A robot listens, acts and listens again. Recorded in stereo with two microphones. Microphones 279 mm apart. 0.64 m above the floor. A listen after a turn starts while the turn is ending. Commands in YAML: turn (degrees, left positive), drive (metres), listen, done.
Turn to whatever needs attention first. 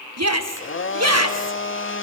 turn: -60
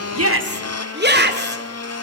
turn: -40
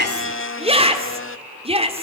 turn: -25
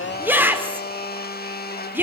turn: -10
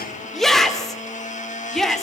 done: "Facing the shout, 2 to 4 m away."